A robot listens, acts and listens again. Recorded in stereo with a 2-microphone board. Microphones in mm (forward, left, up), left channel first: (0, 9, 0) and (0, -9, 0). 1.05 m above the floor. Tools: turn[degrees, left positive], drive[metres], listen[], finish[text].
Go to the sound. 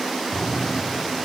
Thought: The cupboard door: about 30° right or 150° right.
Action: turn[-30]
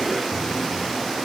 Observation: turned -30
Action: drive[1.0]
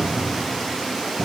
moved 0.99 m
Action: drive[1.0]
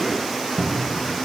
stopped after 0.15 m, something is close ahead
Action: finish[Arrived at the cupboard door, straight ahead.]